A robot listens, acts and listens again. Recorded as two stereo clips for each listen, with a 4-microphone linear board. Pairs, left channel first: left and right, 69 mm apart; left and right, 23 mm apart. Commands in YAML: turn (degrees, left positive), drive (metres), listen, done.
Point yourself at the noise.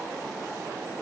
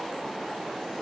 listen: true
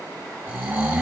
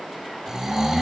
turn: -20
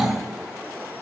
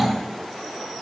done: "Found it: snoring, straight ahead."